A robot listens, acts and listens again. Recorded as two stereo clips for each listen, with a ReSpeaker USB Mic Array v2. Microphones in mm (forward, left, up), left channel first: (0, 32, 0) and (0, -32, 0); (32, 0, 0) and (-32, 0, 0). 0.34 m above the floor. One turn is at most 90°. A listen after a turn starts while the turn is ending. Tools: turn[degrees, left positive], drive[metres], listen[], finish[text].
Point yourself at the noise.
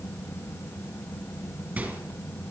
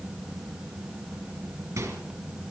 Thought: The microwave: 150° right.
Action: turn[-90]
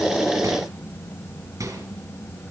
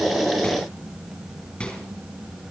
Thought: The microwave is now 65° right.
Action: turn[-65]
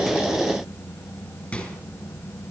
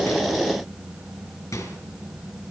Thought: The microwave is now 25° left.
Action: turn[25]
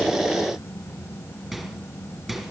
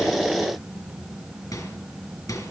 Action: finish[Facing the microwave, 2 to 4 m away.]